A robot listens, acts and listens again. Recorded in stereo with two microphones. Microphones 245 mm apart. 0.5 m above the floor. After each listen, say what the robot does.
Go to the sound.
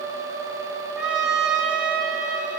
Turn 30° right.
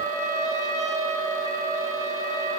Turn 150° right.
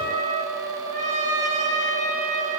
Turn 30° right.
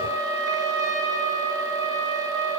Turn 15° right.
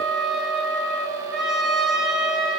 Drive 1.0 m forward.
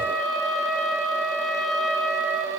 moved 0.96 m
Drive 1.0 m forward.
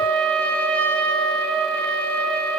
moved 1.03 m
Drive 1.0 m forward.
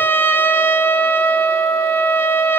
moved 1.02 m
Turn 10° left.
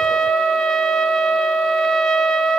Drive 1.0 m forward.
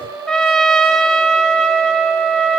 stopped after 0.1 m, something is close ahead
Arrived at the trumpet, straight ahead.